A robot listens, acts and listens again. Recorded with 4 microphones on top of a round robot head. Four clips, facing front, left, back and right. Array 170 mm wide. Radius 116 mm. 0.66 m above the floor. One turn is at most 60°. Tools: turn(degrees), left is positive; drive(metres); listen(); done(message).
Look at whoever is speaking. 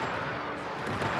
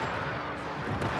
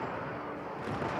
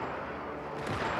listen()
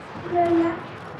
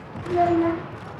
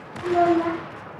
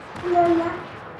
turn(degrees=-60)
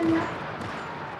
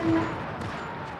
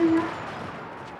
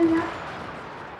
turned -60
turn(degrees=-60)
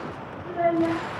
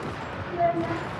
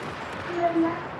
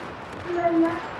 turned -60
turn(degrees=-60)
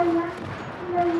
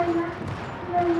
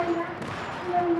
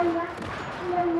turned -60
turn(degrees=-55)
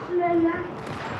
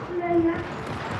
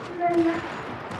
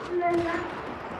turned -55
done("Facing the child speaking, 2 to 4 m away.")